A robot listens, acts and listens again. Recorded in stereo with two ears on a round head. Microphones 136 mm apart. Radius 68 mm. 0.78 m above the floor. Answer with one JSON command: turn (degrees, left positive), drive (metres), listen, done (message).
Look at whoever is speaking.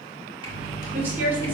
{"turn": -30}
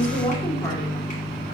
{"turn": 15}
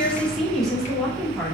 {"done": "Facing the woman speaking, 2 to 4 m away."}